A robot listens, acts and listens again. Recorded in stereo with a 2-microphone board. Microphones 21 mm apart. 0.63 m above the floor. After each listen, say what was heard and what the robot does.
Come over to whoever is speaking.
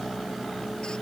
Keep listening.
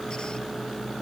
Keep listening.
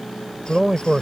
The man speaking: about 30° right or 150° right. Turn 30° right.
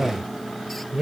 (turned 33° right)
So it is at 115° right. Turn 115° right.
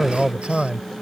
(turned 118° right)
Drive 1.0 m forward.
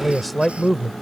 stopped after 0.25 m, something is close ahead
Blocked. The man speaking is further on, straight ahead.